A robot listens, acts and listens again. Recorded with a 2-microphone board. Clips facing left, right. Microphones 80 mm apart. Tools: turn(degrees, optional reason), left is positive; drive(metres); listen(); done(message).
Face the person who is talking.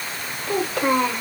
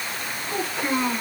turn(degrees=90)
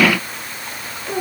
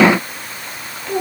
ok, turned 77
done("Facing the child speaking, 2 to 4 m away.")